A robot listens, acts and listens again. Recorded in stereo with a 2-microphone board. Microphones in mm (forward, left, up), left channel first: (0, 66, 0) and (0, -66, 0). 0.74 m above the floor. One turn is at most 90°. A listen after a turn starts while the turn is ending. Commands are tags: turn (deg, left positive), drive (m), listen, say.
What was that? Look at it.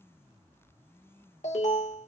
<turn deg="65"/>
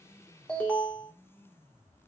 <turn deg="10"/>
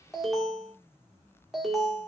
<say>Facing the alarm, 2 to 4 m away.</say>